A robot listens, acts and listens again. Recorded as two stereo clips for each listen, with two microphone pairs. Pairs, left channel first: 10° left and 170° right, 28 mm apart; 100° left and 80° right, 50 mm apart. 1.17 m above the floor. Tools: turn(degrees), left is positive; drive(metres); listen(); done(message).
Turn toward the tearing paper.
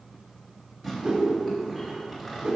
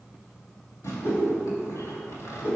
turn(degrees=85)
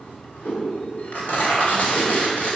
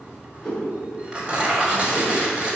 turn(degrees=-10)
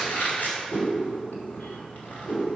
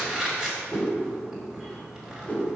done("Facing the tearing paper, 2 to 4 m away.")